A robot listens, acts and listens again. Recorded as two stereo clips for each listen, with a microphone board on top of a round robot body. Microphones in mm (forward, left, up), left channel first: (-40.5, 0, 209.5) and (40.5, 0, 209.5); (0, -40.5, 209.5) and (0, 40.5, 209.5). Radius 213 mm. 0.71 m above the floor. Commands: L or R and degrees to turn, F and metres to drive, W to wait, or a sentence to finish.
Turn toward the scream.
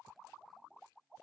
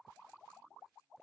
W
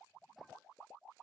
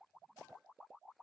W
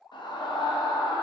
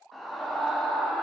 L180
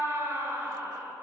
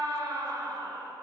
L55
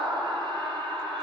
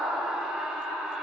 L10
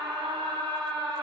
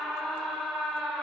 Found it: a scream, straight ahead, 1 to 2 m away.